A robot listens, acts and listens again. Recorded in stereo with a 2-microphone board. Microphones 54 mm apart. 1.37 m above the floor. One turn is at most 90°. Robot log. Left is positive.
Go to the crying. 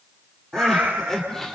cmd yaw +30
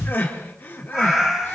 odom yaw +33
note: So it is at 140° left.
cmd yaw +90
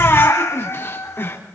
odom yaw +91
note: The crying is now 50° left.
cmd yaw +50
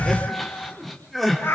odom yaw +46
cmd fwd 1.0
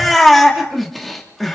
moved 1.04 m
cmd fwd 1.0
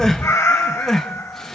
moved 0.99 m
note: The crying is now 10° left.
cmd yaw +10
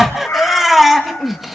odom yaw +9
cmd fwd 1.0
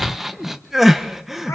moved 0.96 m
cmd fwd 1.0
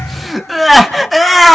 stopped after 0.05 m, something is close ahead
end: I am next to the crying.